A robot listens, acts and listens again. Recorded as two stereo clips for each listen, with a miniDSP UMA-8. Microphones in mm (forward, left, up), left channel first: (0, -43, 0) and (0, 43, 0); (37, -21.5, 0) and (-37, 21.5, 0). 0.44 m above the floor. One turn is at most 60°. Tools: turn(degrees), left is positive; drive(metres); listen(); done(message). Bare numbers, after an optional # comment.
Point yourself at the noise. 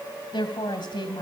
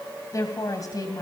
# The woman speaking: 70° right.
turn(-60)
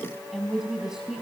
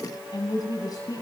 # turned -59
# The woman speaking is now 10° left.
turn(10)
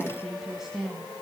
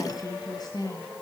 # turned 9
# The woman speaking is now 10° left.
turn(10)
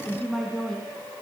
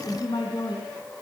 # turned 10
done("Found it: a woman speaking, straight ahead.")